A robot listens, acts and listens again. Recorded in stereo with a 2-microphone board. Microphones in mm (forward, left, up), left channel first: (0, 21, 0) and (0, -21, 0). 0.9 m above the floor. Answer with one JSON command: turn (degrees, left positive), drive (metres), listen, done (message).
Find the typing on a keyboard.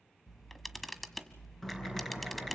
{"turn": 30}
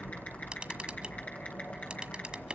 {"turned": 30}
{"turn": 140}
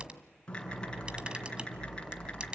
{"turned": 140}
{"turn": 20}
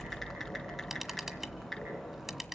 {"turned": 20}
{"done": "Found it: typing on a keyboard, straight ahead, over 4 m away."}